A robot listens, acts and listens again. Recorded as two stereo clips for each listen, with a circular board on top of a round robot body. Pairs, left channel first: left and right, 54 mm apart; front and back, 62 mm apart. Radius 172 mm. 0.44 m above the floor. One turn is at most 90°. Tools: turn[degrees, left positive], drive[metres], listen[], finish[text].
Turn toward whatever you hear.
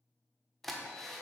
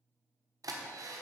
Thought: The drill: 175° left.
Action: turn[90]
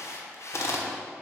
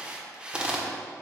Thought: The drill is now 105° left.
Action: turn[90]
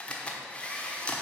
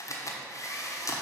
Thought: The drill is now 25° left.
Action: turn[25]
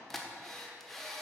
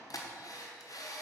Action: finish[Found it: a drill, straight ahead, 1 to 2 m away.]